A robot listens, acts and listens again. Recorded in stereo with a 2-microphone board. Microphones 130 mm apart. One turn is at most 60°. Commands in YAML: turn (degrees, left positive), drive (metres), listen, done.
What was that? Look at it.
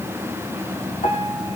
turn: 60
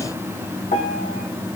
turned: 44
turn: 60
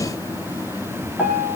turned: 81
turn: -10
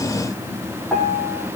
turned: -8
done: "Facing the piano, over 4 m away."